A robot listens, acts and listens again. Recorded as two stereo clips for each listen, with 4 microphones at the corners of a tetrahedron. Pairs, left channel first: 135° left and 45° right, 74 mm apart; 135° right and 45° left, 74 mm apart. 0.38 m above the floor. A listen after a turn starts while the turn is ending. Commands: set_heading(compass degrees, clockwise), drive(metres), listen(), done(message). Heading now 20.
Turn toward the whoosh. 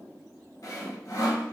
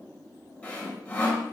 listen()
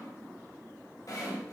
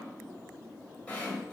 listen()
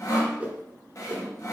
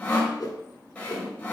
set_heading(135)
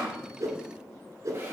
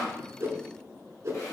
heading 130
done("Found it: a whoosh, straight ahead, under 1 m away.")